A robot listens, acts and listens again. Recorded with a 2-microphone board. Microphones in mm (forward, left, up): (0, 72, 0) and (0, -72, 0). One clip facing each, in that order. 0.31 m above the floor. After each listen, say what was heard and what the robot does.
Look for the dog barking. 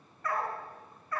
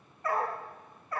The dog barking: about 30° right or 150° right. Turn 30° right.
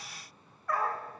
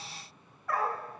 Found it: a dog barking, straight ahead.